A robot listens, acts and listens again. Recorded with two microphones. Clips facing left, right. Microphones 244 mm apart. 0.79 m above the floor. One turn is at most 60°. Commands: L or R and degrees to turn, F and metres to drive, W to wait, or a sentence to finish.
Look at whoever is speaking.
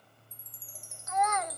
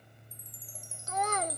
R35
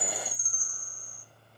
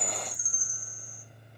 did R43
W
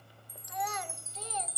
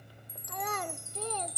R60
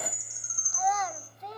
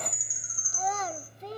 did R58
R40
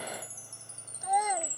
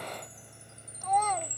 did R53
L10
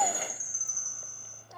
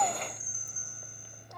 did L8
W
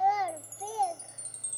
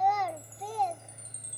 Facing the child speaking.